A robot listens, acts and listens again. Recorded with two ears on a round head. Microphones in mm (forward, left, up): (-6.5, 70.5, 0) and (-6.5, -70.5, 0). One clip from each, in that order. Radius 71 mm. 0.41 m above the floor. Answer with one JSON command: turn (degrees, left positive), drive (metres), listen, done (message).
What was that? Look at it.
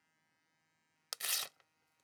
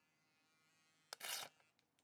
{"turn": 65}
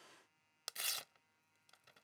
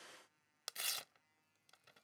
{"done": "Found it: tearing paper, straight ahead."}